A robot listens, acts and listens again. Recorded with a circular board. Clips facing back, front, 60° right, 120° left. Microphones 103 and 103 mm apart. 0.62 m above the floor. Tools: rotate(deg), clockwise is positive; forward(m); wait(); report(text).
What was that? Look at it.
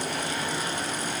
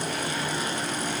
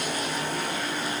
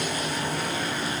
wait()
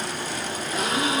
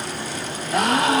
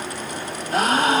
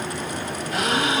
rotate(15)
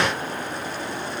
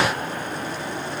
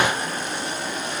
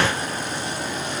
report("Facing where the gasp came from. I can't hear it now.")